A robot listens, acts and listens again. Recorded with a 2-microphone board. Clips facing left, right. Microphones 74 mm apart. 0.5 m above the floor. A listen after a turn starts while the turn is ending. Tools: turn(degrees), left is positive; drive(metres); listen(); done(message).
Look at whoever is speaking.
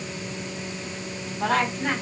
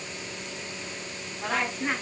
turn(degrees=60)
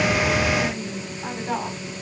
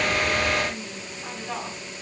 turn(degrees=50)
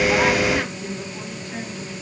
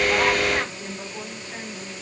turn(degrees=-10)
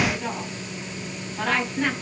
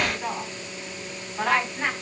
done("Found it: a woman speaking, straight ahead, over 4 m away.")